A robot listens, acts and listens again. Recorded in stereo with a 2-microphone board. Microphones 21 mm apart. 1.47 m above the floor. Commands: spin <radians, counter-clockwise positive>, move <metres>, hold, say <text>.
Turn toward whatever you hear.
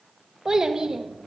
spin -0.52
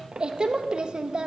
spin -2.09
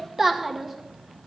spin -0.44
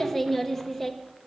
say Facing the child speaking, under 1 m away.